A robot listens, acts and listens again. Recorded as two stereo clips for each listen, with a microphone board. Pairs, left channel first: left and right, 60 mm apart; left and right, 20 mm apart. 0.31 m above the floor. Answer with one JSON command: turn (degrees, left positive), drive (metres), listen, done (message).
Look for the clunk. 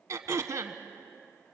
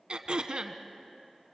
{"listen": true}
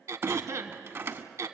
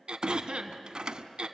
{"turn": -45}
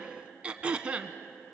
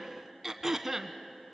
{"listen": true}
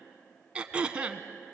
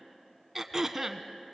{"done": "I heard a clunk, but can't make it out now. It was about straight ahead or 90° right."}